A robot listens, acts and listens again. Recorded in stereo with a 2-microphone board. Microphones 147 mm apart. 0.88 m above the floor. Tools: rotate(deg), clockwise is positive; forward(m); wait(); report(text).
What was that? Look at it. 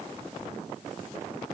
wait()
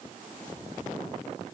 wait()
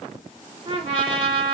rotate(40)
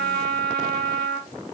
report("Found it: a trumpet, straight ahead.")